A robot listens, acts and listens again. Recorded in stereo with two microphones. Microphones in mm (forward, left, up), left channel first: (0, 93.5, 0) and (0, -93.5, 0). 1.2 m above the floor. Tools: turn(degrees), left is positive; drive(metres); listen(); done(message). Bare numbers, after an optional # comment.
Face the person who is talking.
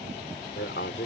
turn(90)
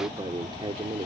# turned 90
# So it is at 30° right.
turn(-30)
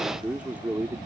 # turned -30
# The man speaking is now 10° right.
turn(-10)
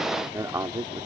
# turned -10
# The man speaking is now 20° right.
turn(-20)
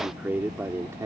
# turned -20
# The man speaking is now 15° right.
turn(-15)
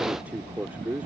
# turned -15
# The man speaking is now 10° right.
turn(-10)
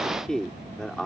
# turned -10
done("Facing the man speaking.")